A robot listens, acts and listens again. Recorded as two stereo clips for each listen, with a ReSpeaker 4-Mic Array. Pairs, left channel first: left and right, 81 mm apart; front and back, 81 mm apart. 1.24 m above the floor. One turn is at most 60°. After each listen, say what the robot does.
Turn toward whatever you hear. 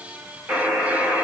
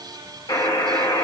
Turn 20° right.
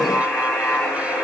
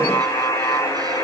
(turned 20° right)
Found it: a buzzer, straight ahead, 1 to 2 m away.